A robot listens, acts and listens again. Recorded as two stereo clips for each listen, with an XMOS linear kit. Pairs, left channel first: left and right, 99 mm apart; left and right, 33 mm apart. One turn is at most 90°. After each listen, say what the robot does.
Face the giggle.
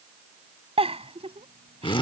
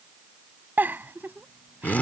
Turn 90° right.
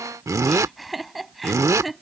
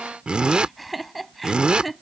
Found it: a giggle, straight ahead.